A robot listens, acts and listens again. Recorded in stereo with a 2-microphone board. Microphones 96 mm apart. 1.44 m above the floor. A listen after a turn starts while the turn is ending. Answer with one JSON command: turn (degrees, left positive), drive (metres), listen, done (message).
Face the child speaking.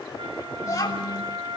{"turn": 35}
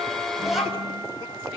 {"done": "Found it: a child speaking, straight ahead."}